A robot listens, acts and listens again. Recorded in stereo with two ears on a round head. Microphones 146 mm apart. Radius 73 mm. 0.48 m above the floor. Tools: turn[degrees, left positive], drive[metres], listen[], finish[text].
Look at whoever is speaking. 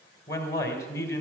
Thought: The man speaking: about 20° left or 160° left.
Action: turn[20]
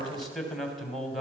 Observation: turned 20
Action: finish[Facing the man speaking.]